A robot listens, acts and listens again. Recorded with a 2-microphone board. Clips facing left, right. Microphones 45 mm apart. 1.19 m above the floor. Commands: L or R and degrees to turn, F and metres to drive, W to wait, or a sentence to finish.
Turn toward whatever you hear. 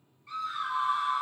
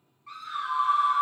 R75
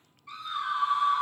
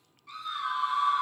Found it: a scream, straight ahead, under 1 m away.